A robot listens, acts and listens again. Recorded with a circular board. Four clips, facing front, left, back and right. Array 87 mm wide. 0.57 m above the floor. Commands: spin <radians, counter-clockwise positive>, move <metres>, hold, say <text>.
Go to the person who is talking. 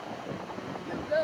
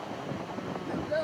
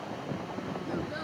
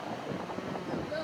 spin 0.44
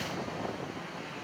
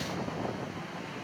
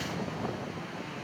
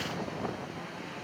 hold
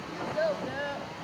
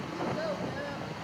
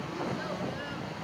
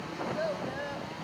spin -0.26
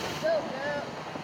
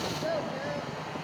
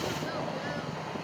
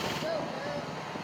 move 1.0
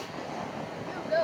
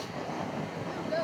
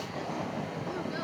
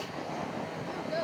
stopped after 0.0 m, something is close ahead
say Blocked. The child speaking is further on, straight ahead.